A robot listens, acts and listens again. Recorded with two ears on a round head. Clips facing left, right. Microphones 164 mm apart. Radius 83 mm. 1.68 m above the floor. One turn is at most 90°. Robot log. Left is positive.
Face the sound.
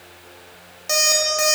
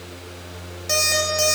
cmd yaw +30
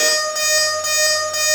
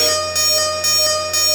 note: So it is at 35° right.
cmd yaw -35
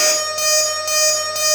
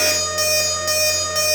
end: Facing the alarm clock.